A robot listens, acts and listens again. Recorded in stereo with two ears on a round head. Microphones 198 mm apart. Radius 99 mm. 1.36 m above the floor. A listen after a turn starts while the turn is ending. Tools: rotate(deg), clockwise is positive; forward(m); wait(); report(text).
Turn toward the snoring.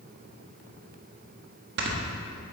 rotate(50)
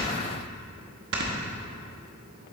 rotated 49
rotate(65)
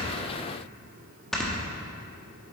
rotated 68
report("Facing the snoring.")